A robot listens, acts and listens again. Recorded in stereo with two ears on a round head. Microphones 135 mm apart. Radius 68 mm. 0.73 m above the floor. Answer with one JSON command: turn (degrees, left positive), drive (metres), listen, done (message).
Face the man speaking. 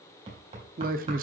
{"turn": -65}
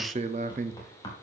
{"turn": -50}
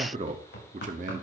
{"turn": -50}
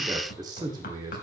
{"turn": -30}
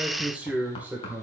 {"turn": -10}
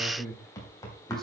{"done": "Found it: a man speaking, straight ahead."}